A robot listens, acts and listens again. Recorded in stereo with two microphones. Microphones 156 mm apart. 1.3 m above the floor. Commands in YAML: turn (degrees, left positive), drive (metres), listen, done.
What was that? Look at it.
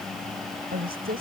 turn: -75
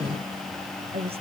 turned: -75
turn: -40
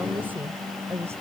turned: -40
turn: -15
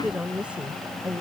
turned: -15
turn: -10
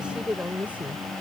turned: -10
turn: -10
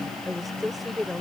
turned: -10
done: "Found it: a woman speaking, straight ahead."